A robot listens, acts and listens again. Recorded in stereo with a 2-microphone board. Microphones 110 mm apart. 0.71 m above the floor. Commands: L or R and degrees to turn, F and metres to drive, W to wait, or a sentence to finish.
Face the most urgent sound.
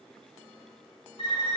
W
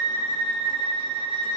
W
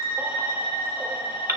R20
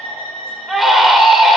Found it: a baby crying, straight ahead, under 1 m away.